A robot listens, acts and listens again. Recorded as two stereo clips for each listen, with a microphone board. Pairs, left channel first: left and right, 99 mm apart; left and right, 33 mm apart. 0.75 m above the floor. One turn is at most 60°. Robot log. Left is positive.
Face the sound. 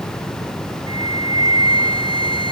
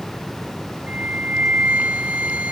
note: The flute: about 60° right or 120° right.
cmd yaw -60
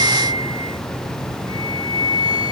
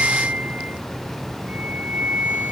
note: So it is at 60° right.
cmd yaw -60
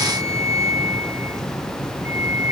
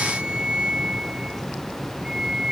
note: The flute is now 30° right.
cmd yaw -30
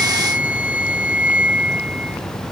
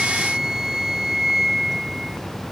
note: The flute is now 15° right.
cmd yaw -15
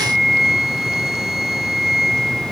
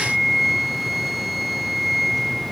end: Facing the flute.